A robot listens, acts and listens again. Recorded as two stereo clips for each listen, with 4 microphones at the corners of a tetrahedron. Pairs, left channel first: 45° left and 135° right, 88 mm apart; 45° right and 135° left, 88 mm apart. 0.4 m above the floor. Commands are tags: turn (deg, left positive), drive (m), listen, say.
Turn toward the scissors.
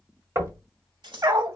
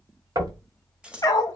<turn deg="-145"/>
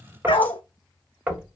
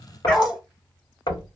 <listen/>
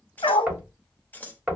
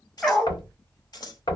<turn deg="-20"/>
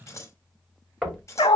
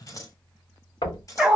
<say>Facing the scissors.</say>